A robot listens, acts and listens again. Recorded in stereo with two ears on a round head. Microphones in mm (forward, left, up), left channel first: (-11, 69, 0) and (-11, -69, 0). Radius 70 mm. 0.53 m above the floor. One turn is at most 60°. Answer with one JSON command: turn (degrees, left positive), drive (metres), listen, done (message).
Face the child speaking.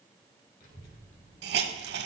{"turn": 60}
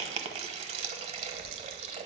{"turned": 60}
{"turn": 20}
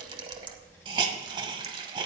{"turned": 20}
{"turn": 15}
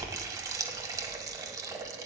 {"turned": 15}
{"turn": 10}
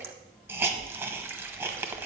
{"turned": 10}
{"done": "Found it: a child speaking, straight ahead, over 4 m away."}